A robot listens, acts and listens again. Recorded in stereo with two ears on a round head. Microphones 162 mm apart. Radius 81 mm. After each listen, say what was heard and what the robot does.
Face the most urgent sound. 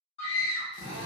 The scream: about 35° left or 145° left. Turn 35° left.
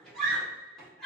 Found it: a scream, straight ahead.